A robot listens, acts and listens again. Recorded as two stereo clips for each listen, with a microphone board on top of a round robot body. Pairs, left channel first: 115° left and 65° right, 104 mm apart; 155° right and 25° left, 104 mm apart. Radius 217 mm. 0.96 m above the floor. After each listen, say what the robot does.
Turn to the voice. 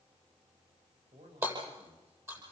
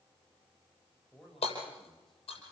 Turn 70° right.
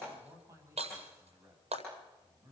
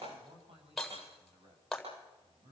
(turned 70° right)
Facing the man speaking.